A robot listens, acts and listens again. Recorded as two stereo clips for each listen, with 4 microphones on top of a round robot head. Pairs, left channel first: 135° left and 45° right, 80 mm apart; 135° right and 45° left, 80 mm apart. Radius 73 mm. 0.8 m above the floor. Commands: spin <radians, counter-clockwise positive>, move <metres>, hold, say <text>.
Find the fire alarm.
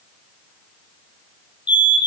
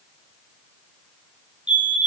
spin 2.09
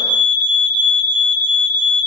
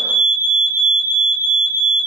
spin -0.35
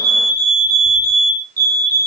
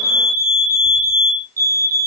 say Facing the fire alarm, 2 to 4 m away.